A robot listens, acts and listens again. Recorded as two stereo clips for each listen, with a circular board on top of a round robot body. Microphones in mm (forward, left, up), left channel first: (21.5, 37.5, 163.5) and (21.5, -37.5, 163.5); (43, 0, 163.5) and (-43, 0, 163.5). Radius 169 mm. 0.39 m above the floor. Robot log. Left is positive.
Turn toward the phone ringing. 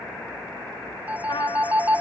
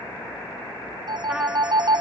note: The phone ringing: 160° right.
cmd yaw -160
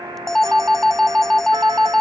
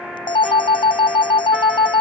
end: Facing the phone ringing.